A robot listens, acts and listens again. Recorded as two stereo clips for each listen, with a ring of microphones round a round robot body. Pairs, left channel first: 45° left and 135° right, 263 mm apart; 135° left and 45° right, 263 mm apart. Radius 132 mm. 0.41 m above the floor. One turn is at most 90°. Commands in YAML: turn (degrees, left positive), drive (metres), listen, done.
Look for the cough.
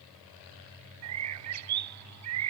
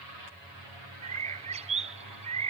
listen: true
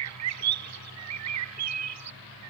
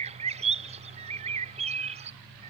listen: true
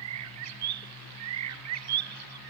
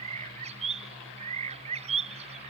done: "I can't make out a cough to turn to."